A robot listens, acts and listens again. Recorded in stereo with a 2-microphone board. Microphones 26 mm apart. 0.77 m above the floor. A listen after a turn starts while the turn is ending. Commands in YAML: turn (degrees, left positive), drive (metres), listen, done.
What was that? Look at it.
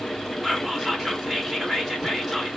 turn: -30
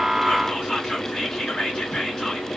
turn: 20
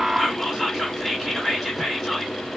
done: "Facing the whispering."